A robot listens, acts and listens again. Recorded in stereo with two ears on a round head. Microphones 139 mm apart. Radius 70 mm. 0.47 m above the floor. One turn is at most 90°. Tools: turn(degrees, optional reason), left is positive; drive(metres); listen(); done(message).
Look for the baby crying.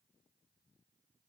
listen()
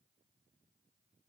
listen()
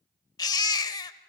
turn(degrees=25, reason="The baby crying: about 25° left or 155° left.")
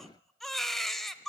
done("Found it: a baby crying, straight ahead, under 1 m away.")